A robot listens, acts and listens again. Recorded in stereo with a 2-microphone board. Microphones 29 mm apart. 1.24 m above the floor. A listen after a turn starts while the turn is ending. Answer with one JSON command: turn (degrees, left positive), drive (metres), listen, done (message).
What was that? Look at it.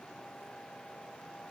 {"listen": true}
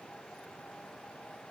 {"listen": true}
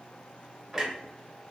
{"turn": -30}
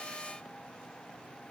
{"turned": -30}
{"listen": true}
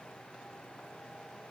{"done": "I heard a clunk, but can't make it out now. It was about 20° left or 140° right."}